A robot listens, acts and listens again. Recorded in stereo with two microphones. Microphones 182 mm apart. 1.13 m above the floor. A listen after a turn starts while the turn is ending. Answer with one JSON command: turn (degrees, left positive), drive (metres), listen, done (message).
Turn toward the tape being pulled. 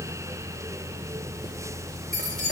{"listen": true}
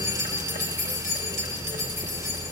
{"listen": true}
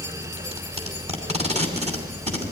{"turn": -35}
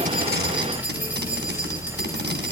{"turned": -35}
{"listen": true}
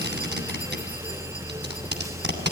{"turn": -105}
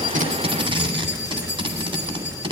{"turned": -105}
{"turn": -30}
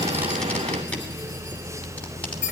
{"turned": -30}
{"listen": true}
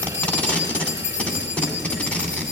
{"turn": 10}
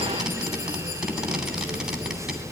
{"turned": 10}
{"listen": true}
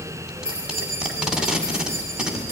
{"done": "Facing the tape being pulled, 2 to 4 m away."}